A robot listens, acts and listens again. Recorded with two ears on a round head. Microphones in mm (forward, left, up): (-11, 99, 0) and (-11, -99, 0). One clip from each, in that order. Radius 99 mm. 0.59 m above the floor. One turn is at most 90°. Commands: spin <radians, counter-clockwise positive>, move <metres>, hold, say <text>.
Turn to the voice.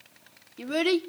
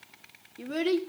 spin 0.44
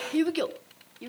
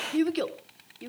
say Found it: a child speaking, straight ahead, 1 to 2 m away.